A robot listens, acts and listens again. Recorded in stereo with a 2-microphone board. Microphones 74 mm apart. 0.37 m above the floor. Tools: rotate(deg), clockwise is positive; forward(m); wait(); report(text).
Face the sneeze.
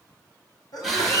rotate(-60)
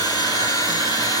wait()
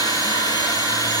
report("I heard a sneeze, but can't make it out now. It was about straight ahead or 60° left.")